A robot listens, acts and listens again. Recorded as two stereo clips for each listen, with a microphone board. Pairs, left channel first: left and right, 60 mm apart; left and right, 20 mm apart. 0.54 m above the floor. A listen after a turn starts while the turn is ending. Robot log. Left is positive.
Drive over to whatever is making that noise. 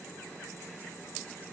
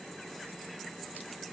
cmd idle
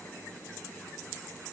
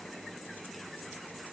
cmd idle
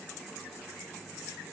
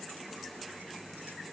end: I can't make out anything.